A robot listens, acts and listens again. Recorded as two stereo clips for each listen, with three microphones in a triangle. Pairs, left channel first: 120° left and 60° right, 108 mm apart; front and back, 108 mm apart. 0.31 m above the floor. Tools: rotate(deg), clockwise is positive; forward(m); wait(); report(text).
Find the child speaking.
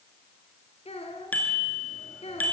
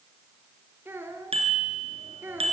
rotate(-110)
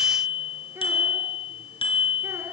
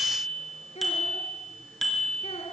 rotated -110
wait()
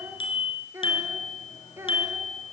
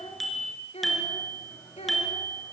report("Found it: a child speaking, straight ahead, 2 to 4 m away.")